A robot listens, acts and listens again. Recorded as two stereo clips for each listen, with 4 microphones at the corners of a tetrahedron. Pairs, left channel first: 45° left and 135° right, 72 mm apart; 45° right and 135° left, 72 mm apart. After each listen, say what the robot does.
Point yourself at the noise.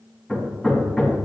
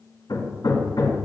Turn 40° right.
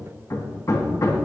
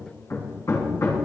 Facing the hammering, 2 to 4 m away.